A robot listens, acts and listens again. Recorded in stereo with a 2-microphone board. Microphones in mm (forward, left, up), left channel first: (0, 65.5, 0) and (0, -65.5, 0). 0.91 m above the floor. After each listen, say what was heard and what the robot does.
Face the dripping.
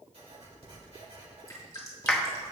The dripping: about 25° left or 155° left. Turn 25° left.
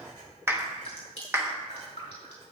So it is at 130° left. Turn 130° left.
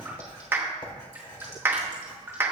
Keep listening.
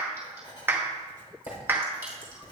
Keep listening.
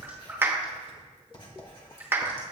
I heard dripping from this way, but can't make it out now.